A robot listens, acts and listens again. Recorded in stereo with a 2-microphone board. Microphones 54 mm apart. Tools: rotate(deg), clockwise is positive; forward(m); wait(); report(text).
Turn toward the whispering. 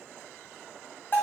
wait()
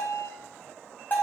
wait()
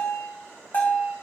report("I can't make out whispering, only a bell.")